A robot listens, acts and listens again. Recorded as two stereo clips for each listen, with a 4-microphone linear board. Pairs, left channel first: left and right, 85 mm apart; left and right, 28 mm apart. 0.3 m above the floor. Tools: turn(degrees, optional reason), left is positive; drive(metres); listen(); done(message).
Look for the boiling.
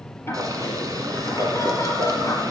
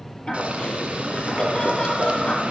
turn(degrees=-45, reason="The boiling: about 45° right or 135° right.")
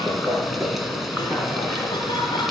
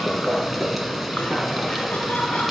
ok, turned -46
done("Facing the boiling, 1 to 2 m away.")